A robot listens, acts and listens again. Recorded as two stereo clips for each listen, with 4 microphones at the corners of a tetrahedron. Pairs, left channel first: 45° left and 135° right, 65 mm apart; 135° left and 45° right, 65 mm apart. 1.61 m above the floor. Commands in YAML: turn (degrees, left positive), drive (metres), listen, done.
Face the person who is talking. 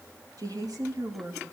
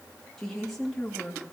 turn: -140
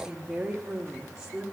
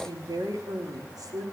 turn: -50
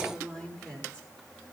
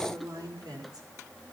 turn: -25
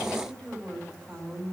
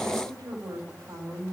turn: -25
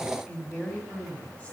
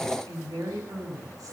turn: -20
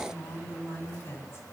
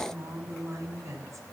done: "Found it: a woman speaking, straight ahead, over 4 m away."